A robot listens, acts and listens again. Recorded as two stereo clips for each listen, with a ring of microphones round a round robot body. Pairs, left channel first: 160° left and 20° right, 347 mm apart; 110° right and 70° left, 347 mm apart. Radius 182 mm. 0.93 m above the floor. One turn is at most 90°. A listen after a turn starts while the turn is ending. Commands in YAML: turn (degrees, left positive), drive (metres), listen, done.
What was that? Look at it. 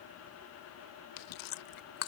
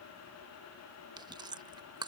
turn: 90
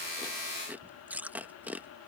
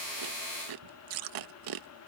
turn: 60
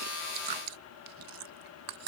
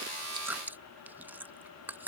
turn: -15
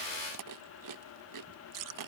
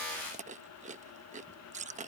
done: "Found it: chewing, straight ahead."